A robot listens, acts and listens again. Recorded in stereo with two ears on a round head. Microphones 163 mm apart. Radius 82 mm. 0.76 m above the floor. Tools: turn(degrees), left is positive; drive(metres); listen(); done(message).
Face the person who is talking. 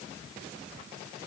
listen()
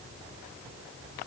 listen()
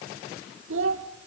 turn(degrees=-75)
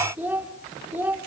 turn(degrees=-10)
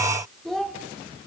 done("Found it: a child speaking, straight ahead, 1 to 2 m away.")